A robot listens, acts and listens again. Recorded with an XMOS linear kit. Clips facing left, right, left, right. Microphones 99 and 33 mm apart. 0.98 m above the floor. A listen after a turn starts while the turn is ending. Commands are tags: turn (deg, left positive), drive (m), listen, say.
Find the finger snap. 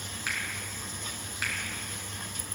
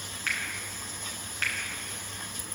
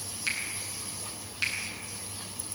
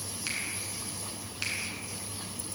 <turn deg="30"/>
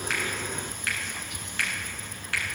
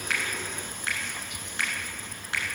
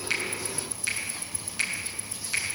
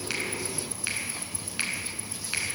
<turn deg="-25"/>
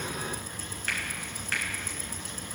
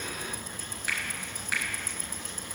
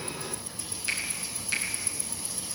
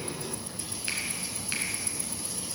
<turn deg="-10"/>
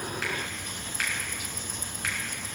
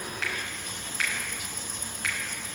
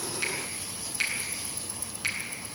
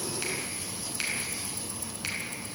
<say>Found it: a finger snap, straight ahead.</say>